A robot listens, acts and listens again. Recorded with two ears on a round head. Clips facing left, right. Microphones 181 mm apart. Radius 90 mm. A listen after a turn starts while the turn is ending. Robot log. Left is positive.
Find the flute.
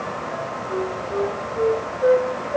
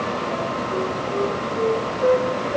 cmd yaw +30
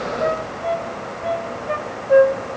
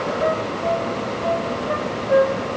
note: So it is at 145° left.
cmd yaw +145
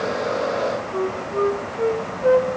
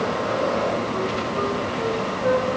note: The flute is now 45° left.
cmd yaw +45
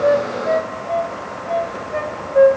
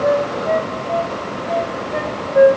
end: Facing the flute.